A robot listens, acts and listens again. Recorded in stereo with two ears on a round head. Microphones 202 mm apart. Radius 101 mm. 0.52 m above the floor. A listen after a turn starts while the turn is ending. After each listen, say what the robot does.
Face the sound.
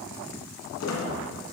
Turn 90° left.
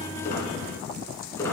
Turn 15° left.
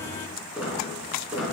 Facing the squeak, 2 to 4 m away.